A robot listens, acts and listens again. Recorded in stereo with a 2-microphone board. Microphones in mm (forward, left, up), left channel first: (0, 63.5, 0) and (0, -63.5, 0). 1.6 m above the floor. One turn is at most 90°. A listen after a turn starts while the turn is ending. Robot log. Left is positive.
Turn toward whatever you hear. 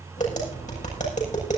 note: The tapping: about 75° left or 105° left.
cmd yaw +75
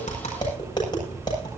note: So it is at 35° left.
cmd yaw +35
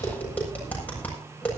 note: The tapping is now 10° left.
cmd yaw +10
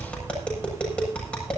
note: The tapping is now 10° left.
cmd yaw +10
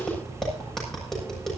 end: Found it: tapping, straight ahead.